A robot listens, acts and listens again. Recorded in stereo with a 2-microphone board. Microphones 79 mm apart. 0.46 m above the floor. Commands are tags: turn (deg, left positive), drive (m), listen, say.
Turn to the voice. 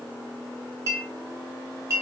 <listen/>
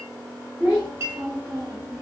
<turn deg="-35"/>
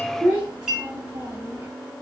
<turn deg="-35"/>
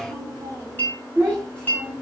<turn deg="-25"/>
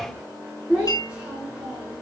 <say>Found it: a child speaking, straight ahead, 1 to 2 m away.</say>